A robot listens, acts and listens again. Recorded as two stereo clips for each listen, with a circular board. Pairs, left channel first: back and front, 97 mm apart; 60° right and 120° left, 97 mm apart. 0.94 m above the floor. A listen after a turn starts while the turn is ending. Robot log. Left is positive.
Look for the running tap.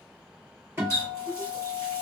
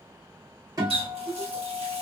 note: The running tap: 120° left.
cmd yaw +120
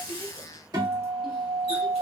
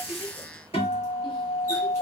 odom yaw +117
cmd idle
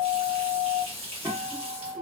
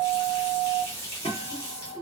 end: Facing the running tap.